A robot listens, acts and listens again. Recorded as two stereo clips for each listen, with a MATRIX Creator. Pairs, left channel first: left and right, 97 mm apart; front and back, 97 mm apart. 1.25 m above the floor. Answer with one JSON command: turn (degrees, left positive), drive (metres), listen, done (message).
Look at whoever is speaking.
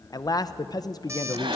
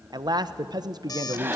{"turn": 135}
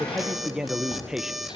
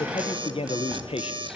{"turn": -10}
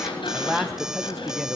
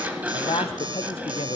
{"done": "Found it: a man speaking, straight ahead."}